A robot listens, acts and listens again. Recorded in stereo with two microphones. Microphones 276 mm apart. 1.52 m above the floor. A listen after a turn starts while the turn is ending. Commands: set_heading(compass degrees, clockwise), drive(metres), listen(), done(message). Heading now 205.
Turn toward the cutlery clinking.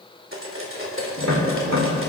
set_heading(255)
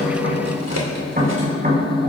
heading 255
listen()
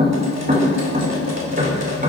listen()
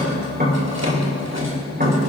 done("I heard cutlery clinking, but can't make it out now. It was about straight ahead or 80° right.")